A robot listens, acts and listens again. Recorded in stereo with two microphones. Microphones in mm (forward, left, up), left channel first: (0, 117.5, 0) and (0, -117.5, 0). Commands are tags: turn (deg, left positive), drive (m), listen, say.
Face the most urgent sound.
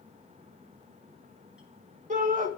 <turn deg="-35"/>
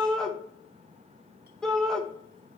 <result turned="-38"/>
<say>Found it: a shout, straight ahead, 1 to 2 m away.</say>